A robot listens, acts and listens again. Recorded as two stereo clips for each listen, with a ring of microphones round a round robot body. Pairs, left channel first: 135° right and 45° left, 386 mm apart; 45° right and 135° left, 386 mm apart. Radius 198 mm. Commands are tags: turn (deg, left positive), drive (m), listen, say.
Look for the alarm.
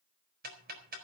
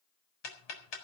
<listen/>
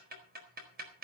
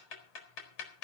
<listen/>
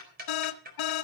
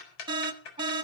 <turn deg="-150"/>
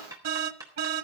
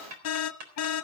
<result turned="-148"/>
<say>Found it: an alarm, straight ahead.</say>